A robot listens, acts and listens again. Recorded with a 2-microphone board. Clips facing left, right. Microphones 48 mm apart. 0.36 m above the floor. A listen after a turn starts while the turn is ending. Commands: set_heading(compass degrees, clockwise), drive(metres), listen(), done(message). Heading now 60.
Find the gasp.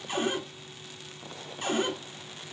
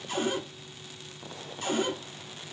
listen()
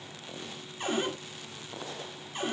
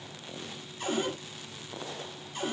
listen()
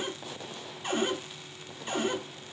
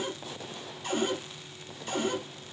done("I can't make out a gasp, only a cupboard door.")